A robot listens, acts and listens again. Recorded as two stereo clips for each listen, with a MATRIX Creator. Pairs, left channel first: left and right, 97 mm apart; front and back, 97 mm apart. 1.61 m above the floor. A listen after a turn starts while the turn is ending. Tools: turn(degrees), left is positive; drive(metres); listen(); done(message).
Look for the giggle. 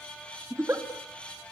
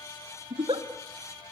turn(degrees=-155)
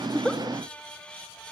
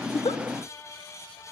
listen()
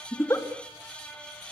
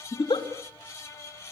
turn(degrees=25)
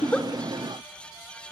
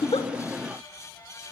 listen()
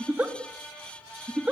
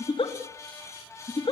turn(degrees=-15)
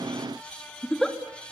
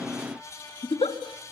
done("Facing the giggle, 2 to 4 m away.")